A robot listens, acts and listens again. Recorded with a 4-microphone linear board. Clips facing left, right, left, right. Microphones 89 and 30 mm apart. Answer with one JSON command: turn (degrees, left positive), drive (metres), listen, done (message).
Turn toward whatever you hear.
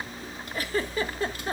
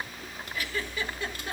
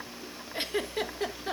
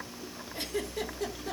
{"turn": 35}
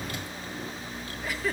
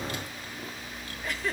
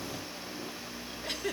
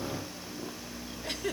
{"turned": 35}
{"done": "Facing the giggle, 1 to 2 m away."}